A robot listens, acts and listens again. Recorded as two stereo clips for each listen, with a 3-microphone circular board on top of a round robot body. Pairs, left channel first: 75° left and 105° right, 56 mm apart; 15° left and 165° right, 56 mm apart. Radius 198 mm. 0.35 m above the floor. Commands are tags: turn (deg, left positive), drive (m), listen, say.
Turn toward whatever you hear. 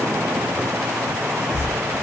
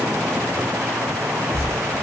<turn deg="-130"/>
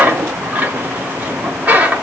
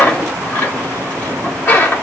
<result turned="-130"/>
<turn deg="-45"/>
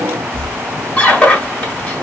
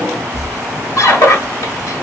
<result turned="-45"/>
<turn deg="15"/>
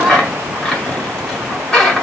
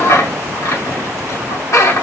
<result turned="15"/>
<say>Found it: a squeak, straight ahead, 1 to 2 m away.</say>